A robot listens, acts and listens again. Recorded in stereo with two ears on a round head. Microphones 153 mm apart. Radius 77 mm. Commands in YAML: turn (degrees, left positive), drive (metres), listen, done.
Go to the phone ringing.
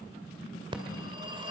turn: -30
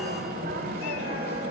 turn: -120
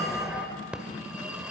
drive: 1.0
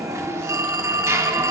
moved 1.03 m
turn: -20
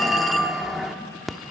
drive: 1.0
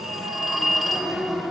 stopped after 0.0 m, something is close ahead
done: "I am next to the phone ringing."